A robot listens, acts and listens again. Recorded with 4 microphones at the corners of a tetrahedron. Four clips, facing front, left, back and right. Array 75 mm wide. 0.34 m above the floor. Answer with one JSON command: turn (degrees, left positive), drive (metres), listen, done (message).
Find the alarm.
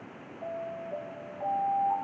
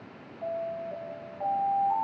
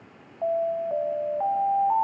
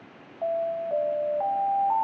{"turn": -140}
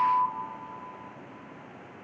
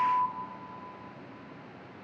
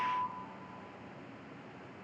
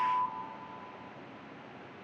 {"done": "Found it: an alarm, straight ahead, 1 to 2 m away."}